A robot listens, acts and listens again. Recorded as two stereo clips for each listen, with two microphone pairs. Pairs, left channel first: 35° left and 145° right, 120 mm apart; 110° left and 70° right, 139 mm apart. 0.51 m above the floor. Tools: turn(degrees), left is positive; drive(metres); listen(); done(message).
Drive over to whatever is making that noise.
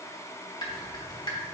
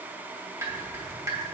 drive(metres=1.0)
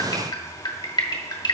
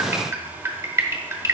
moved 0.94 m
drive(metres=1.0)
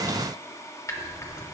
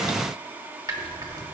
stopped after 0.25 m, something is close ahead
turn(degrees=-20)
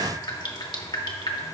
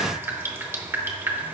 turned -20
done("Arrived at the dripping, straight ahead.")